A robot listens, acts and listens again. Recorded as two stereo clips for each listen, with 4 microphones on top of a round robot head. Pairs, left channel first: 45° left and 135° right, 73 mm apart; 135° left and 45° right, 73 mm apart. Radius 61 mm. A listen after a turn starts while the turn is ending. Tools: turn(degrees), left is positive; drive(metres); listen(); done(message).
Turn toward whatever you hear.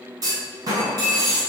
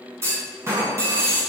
turn(degrees=-100)
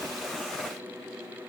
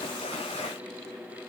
done("Facing where the clunk came from. I can't hear it now.")